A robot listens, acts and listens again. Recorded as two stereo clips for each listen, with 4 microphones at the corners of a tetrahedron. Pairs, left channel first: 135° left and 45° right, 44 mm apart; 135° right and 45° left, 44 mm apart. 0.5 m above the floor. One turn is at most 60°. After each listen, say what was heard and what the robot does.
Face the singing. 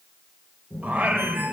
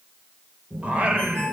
The singing: 10° right. Turn 10° right.
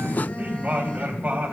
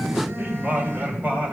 Facing the singing.